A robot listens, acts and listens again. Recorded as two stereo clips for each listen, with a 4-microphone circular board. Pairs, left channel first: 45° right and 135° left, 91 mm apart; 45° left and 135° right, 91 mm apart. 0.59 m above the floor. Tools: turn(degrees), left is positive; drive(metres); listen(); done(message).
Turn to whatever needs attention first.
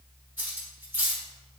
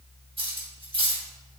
listen()
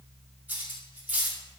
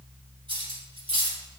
listen()
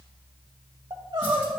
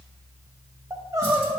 turn(degrees=170)
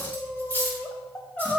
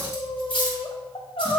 turn(degrees=35)
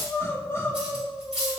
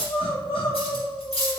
turn(degrees=15)
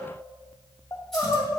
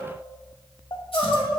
done("Found it: crying, straight ahead, under 1 m away.")